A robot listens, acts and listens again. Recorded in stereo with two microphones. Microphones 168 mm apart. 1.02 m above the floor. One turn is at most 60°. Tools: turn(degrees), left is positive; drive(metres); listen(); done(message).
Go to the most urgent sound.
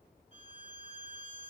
listen()
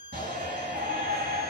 turn(degrees=-60)
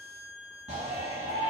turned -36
turn(degrees=-40)
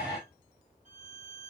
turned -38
drive(metres=1.0)
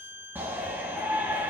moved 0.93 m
turn(degrees=-10)
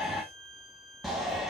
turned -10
drive(metres=1.0)
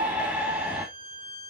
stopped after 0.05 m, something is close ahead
done("Arrived at the shout, straight ahead.")